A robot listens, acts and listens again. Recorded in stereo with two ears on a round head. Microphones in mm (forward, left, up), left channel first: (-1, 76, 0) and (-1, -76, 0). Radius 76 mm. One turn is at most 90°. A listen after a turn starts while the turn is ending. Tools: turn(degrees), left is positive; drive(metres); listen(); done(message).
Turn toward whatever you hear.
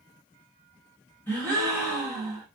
turn(degrees=30)
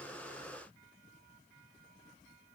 listen()
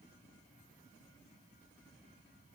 done("I heard a gasp, but can't make it out now. It was about 20° right or 140° left.")